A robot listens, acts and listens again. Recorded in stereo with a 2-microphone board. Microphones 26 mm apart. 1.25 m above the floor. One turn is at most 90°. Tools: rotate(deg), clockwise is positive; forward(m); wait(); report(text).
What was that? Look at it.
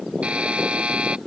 rotate(45)
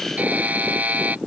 rotate(85)
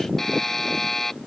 rotate(-15)
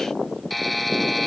report("Facing the buzzer.")